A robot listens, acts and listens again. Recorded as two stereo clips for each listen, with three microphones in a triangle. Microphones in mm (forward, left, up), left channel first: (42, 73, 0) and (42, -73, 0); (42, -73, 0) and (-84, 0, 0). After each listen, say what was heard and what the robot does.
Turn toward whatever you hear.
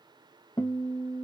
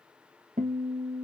The guitar: 150° left. Turn 150° left.
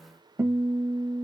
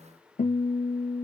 The guitar is now 20° right. Turn 20° right.
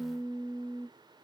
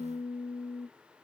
Facing the guitar, 1 to 2 m away.